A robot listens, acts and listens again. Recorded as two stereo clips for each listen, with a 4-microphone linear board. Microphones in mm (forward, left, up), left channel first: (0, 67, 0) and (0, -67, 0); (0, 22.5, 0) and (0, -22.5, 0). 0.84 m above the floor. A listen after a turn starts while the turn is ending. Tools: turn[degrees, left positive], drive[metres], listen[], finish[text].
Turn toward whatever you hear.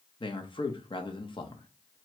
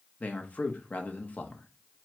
Thought: The man speaking: about 40° left or 140° left.
Action: turn[40]
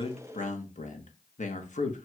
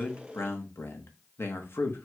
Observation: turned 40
Thought: So it is at 95° left.
Action: turn[95]
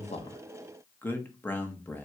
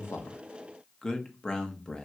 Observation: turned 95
Thought: The man speaking is now 15° left.
Action: turn[15]
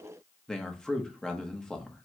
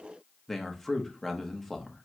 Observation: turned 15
Action: finish[Facing the man speaking, under 1 m away.]